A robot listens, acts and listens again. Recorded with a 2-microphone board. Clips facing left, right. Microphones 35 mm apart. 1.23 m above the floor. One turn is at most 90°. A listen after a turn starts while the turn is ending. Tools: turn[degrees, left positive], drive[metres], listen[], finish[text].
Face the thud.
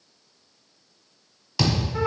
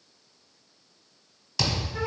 Action: turn[30]
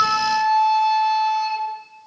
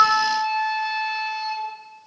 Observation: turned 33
Action: listen[]
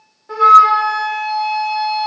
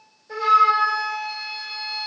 Action: finish[I heard a thud, but can't make it out now. It was about 20° right or 135° left.]